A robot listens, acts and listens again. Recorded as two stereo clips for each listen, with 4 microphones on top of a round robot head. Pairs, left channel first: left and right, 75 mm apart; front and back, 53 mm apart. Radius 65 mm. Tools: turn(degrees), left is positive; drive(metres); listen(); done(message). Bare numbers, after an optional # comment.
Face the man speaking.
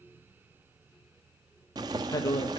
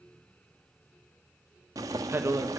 # The man speaking: 140° left.
turn(140)
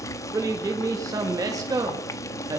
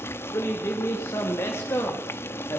# The man speaking is now 55° right.
turn(-55)
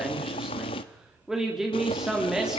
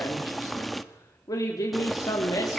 # The man speaking is now 10° right.
turn(-10)
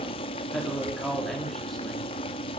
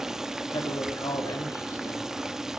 done("Found it: a man speaking, straight ahead.")